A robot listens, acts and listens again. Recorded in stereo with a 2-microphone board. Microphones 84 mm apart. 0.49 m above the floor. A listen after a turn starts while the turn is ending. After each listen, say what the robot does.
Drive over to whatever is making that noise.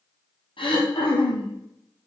Turn 90° left.
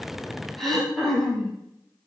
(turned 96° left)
Drive 1.0 m forward.
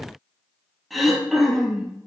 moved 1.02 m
Drive 1.0 m forward.
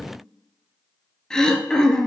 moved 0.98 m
Turn 10° left.
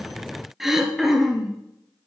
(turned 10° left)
Drive 1.0 m forward.
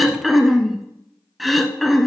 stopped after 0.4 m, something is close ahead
Arrived at the throat clearing, straight ahead.